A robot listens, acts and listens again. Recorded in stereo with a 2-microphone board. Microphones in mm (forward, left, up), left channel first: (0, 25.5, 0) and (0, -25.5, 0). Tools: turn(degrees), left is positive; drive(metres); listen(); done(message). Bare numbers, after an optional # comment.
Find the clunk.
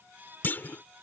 # The clunk: about 45° left or 135° left.
turn(45)
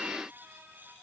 listen()
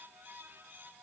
done("I heard a clunk, but can't make it out now. It was about straight ahead or 90° left.")